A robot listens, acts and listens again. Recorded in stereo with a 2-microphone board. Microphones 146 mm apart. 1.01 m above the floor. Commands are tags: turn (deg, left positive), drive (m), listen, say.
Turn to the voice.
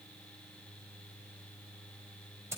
<listen/>
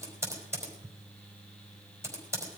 <listen/>
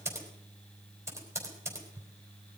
<say>I can't make out anyone speaking to turn to.</say>